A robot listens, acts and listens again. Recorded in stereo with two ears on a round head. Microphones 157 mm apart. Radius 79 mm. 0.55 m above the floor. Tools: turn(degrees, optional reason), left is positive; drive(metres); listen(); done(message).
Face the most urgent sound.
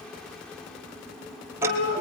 turn(degrees=50, reason="The shout: about 50° left or 130° left.")
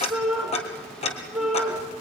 done("Found it: a shout, straight ahead.")